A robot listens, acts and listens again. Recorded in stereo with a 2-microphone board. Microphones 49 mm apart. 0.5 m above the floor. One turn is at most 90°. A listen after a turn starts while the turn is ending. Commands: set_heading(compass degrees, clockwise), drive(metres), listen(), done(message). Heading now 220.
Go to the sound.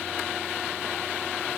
listen()
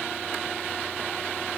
listen()
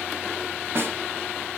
set_heading(280)
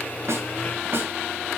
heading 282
set_heading(337)
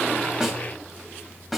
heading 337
drive(1.0)
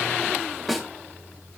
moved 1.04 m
drive(1.0)
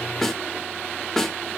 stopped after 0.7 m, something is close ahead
set_heading(322)
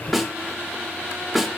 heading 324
done("I am next to the snare drum.")